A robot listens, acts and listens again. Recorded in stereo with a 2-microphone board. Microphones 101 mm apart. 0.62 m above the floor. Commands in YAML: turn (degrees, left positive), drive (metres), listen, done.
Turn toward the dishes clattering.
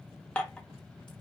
turn: 30
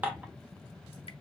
turn: -20
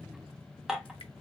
done: "Found it: dishes clattering, straight ahead."